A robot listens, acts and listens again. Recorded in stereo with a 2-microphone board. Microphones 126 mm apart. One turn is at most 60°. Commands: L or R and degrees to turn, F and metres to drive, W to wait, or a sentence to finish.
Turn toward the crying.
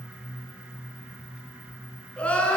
L30
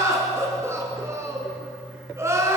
R20
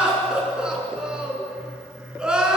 Found it: crying, straight ahead.